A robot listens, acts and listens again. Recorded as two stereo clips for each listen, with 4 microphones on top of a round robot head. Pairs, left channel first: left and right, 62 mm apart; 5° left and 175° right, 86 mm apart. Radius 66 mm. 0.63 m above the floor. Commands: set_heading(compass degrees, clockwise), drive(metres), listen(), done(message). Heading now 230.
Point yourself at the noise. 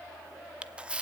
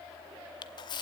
set_heading(250)
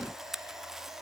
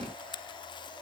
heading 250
done("Facing the camera shutter, under 1 m away.")